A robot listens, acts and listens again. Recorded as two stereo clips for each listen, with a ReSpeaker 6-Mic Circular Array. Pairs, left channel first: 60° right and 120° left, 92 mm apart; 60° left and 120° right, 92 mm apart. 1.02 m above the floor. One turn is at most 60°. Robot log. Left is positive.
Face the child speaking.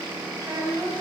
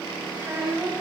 note: The child speaking: 175° left.
cmd yaw +60
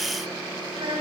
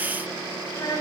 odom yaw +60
note: The child speaking is now 110° left.
cmd yaw +60
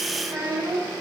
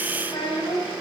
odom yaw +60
note: The child speaking is now 65° left.
cmd yaw +60
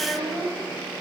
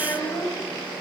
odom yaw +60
note: The child speaking is now 20° left.
cmd yaw +20
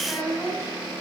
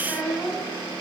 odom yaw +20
end: Found it: a child speaking, straight ahead.